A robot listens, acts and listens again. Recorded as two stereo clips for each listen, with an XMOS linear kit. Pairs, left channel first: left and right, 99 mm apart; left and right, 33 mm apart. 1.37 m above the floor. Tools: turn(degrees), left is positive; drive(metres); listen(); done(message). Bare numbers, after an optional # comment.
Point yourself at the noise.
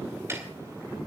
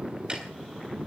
listen()
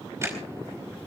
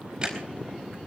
# The ticking: about 25° right or 155° right.
turn(-25)
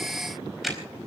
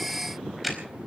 done("Facing the ticking, over 4 m away.")